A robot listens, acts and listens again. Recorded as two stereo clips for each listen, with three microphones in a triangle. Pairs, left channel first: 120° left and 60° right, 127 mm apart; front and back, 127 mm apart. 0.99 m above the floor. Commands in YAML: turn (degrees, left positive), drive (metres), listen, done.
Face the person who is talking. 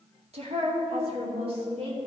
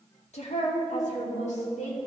turn: -20
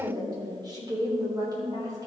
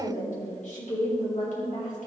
done: "Facing the woman speaking."